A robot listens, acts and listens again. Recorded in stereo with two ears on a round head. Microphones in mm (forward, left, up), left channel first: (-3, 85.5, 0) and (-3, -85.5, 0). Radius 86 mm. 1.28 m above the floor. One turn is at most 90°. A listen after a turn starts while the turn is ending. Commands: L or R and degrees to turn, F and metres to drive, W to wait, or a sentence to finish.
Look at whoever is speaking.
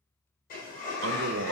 R90
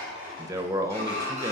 R15
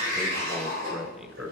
Found it: a man speaking, straight ahead, under 1 m away.